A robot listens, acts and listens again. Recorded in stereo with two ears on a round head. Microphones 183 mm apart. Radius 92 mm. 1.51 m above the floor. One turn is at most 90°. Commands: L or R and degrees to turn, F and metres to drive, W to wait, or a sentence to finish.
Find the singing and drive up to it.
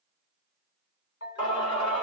L25
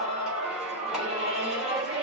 F1.0
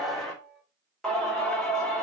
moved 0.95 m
F1.0
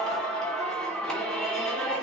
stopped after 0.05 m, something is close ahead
Something is in my way. I am facing the singing but have not reached it.